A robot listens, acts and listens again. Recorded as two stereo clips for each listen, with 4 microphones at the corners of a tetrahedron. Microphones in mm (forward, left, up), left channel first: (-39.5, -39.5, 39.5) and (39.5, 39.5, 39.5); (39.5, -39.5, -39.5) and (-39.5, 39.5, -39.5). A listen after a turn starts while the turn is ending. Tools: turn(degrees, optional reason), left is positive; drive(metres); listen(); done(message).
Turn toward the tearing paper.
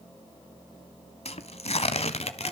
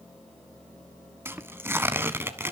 turn(degrees=-155, reason="The tearing paper: 155° right.")
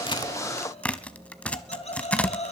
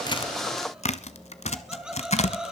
turn(degrees=-55, reason="The tearing paper is now 55° right.")
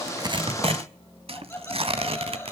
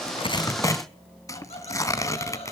turn(degrees=15, reason="The tearing paper is now 15° left.")
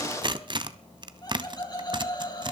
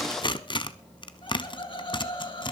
done("Found it: tearing paper, straight ahead, 1 to 2 m away.")